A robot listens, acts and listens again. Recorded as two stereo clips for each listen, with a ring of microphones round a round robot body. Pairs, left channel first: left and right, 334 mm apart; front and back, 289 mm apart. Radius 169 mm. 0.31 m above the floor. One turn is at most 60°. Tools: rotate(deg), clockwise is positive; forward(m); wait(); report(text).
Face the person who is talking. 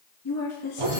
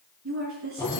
rotate(-60)
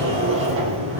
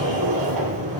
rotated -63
rotate(-60)
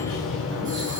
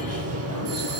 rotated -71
wait()
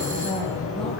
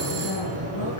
report("I heard a woman speaking from this way, but can't make it out now.")